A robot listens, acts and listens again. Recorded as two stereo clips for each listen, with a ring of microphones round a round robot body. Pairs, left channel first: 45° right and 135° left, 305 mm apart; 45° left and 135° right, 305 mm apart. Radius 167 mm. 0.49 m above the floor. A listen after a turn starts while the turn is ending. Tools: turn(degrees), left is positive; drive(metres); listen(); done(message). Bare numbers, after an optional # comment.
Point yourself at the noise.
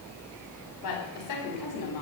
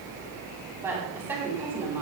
# The woman speaking: 50° right.
turn(-50)
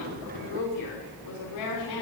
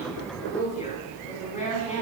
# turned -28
# The woman speaking is now 25° right.
turn(-25)
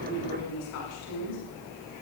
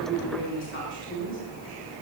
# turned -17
done("Found it: a woman speaking, straight ahead.")